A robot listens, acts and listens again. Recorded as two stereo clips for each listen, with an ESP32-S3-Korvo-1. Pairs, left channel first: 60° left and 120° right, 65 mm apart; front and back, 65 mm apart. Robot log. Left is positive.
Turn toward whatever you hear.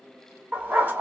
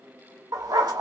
note: The dog barking: straight behind.
cmd yaw +180
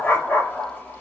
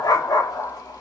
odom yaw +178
end: Found it: a dog barking, straight ahead.